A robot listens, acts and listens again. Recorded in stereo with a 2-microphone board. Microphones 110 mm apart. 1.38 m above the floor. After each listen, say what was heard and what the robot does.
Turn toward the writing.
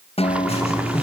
The writing: about 65° left or 115° left. Turn 65° left.
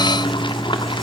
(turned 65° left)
Found it: writing, straight ahead.